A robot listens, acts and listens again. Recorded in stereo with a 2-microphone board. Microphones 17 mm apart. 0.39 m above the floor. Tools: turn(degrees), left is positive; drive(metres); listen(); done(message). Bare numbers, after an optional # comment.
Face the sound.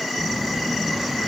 turn(90)
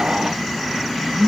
done("Facing the phone buzzing.")